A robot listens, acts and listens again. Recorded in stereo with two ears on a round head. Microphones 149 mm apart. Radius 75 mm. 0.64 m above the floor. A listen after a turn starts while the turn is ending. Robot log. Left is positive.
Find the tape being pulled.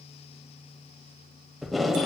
cmd yaw +30
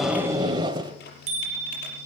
note: So it is at 25° right.
cmd yaw -25
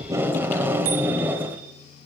note: The tape being pulled is now 10° right.
cmd yaw -10
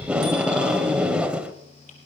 end: Found it: tape being pulled, straight ahead.